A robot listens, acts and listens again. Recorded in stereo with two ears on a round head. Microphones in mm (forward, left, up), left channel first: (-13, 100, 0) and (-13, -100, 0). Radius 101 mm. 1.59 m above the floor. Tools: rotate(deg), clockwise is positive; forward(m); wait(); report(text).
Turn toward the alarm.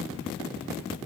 wait()
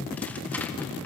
wait()
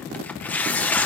report("I can't make out an alarm, only tearing paper.")